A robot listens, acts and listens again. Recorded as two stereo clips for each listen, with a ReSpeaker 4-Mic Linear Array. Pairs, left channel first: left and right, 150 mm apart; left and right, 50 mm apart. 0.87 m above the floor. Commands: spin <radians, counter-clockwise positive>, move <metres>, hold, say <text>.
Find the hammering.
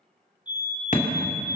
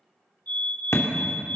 spin 1.05
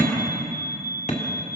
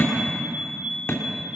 spin 0.96
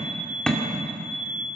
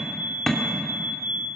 say Found it: hammering, straight ahead.